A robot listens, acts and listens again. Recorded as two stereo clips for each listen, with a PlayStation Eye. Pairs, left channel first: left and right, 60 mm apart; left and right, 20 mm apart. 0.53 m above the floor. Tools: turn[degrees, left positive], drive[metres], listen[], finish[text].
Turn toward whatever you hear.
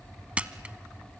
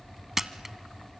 Thought: The camera shutter: about 20° right or 160° right.
Action: turn[-20]
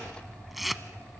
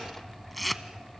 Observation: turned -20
Action: finish[Found it: a camera shutter, straight ahead.]